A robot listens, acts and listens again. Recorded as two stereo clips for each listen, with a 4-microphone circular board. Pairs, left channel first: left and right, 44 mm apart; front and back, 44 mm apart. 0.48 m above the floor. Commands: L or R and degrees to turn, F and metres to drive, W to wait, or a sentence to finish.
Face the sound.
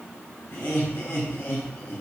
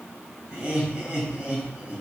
L120
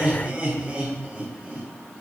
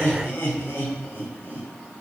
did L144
R25
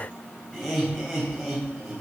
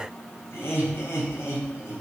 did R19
Facing the laughter.